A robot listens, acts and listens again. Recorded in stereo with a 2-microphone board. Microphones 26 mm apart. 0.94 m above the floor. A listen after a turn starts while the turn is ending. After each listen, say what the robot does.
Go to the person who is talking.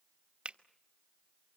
Keep listening.
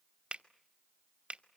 Keep listening.
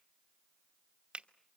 I can't make out anyone speaking to turn to.